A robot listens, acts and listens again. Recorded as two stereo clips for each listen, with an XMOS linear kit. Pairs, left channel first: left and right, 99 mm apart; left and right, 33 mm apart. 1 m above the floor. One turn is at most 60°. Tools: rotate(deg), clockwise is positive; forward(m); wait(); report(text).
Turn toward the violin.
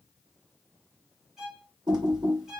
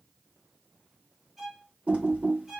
rotate(30)
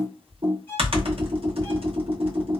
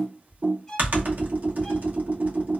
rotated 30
rotate(-25)
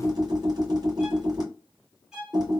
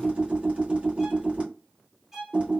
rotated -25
report("Facing the violin.")